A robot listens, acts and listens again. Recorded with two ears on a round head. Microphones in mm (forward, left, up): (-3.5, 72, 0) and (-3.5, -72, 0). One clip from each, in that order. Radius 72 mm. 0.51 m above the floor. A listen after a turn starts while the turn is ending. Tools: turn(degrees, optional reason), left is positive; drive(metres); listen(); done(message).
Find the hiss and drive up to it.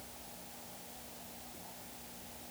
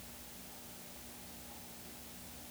listen()
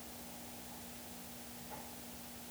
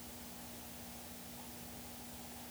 listen()
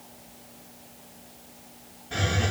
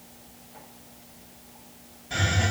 turn(degrees=-45, reason="The hiss: about 45° right or 135° right.")
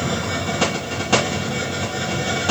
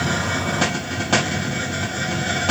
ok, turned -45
drive(metres=1.0)
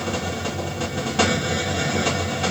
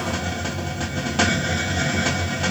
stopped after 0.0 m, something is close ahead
turn(degrees=-10, reason="The hiss is now 10° right.")
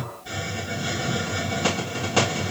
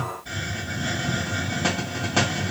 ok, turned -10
done("Something is in my way. I am facing the hiss but have not reached it.")